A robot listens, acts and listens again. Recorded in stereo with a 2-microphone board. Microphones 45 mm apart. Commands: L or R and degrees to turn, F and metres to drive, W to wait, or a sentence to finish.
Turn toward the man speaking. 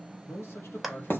L60
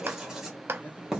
W
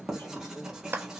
W
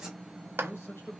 L60
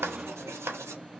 W
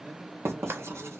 W
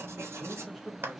Facing the man speaking.